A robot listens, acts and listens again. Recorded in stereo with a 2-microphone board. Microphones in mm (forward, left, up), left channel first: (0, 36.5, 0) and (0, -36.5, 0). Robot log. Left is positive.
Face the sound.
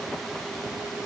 cmd idle
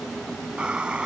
cmd yaw -30
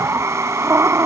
note: So it is at 135° right.
cmd yaw -135
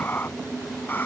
note: The breathing is now 25° left.
cmd yaw +25
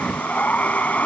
note: The breathing is now 20° left.
cmd yaw +20
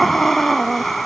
end: Facing the breathing.